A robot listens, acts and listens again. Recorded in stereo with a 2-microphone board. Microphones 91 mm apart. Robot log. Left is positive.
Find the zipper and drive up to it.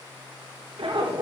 note: The zipper: about 70° right or 110° right.
cmd yaw -70
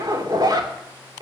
note: So it is at 45° right.
cmd yaw -45
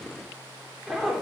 cmd fwd 1.0
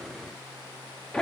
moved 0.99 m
note: The zipper is now 10° left.
cmd yaw +10
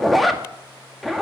cmd fwd 1.0
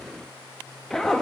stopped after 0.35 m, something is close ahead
end: Arrived at the zipper, straight ahead.